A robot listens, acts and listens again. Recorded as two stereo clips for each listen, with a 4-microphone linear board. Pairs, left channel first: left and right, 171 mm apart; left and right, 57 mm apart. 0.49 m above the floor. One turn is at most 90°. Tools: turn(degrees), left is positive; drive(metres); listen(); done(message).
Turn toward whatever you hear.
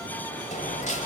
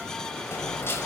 turn(degrees=45)
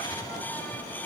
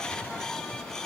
listen()
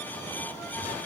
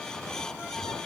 done("I heard a dropped coin, but can't make it out now. It was about straight ahead or 90° left.")